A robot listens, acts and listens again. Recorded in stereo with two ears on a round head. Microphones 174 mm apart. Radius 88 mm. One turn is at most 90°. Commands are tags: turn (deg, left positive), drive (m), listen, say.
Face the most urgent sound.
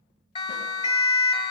<turn deg="30"/>
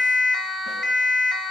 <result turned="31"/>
<say>Facing the siren.</say>